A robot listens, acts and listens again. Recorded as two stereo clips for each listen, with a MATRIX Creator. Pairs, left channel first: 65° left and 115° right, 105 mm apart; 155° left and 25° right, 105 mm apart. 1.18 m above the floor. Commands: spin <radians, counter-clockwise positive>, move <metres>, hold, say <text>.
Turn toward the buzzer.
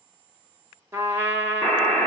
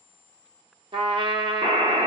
spin -0.26
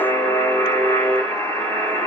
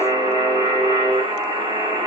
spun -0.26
say Found it: a buzzer, straight ahead.